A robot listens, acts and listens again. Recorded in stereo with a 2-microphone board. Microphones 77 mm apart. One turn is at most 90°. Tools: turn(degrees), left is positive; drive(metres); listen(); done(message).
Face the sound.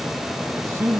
turn(degrees=-30)
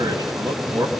turn(degrees=-90)
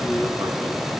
turn(degrees=-40)
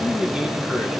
turn(degrees=-10)
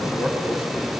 listen()
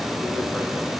listen()
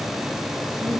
done("I heard a man speaking from this way, but can't make it out now.")